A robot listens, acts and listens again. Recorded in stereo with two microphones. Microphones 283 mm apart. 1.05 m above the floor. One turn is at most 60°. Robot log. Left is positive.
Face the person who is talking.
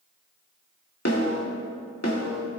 cmd idle
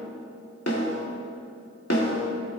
cmd idle
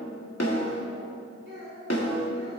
note: The child speaking: about 45° right or 135° right.
cmd yaw -45
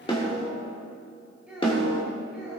end: Found it: a child speaking, straight ahead.